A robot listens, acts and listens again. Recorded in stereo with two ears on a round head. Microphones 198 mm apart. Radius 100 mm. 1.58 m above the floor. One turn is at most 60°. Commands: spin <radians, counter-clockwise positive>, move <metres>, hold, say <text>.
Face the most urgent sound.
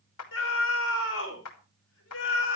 spin 1.05
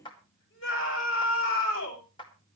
spin 1.05
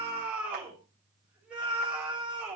say Found it: a scream, straight ahead, over 4 m away.